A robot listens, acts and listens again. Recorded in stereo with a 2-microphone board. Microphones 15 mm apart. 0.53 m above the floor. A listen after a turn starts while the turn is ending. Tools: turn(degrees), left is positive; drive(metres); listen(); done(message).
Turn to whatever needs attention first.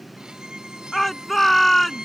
turn(degrees=30)
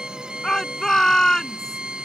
turn(degrees=135)
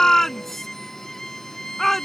turn(degrees=10)
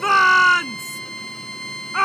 done("Facing the shout.")